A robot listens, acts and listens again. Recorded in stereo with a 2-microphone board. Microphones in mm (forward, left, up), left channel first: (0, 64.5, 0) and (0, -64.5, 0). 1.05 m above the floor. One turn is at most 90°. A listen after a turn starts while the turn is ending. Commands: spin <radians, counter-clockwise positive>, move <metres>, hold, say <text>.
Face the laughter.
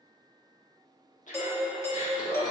spin 1.57
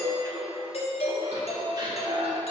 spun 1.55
spin -0.70
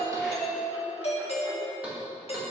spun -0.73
hold
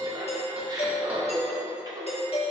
spin -0.52
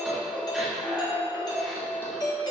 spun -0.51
say Found it: laughter, straight ahead.